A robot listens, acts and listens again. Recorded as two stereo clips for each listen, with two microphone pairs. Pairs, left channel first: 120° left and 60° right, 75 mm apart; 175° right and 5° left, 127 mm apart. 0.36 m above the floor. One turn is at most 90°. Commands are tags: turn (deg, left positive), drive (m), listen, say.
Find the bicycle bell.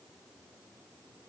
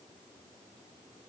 <listen/>
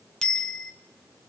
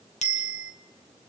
<turn deg="-90"/>
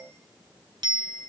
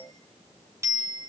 <turn deg="-60"/>
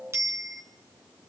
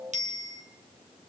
<say>Found it: a bicycle bell, straight ahead, 2 to 4 m away.</say>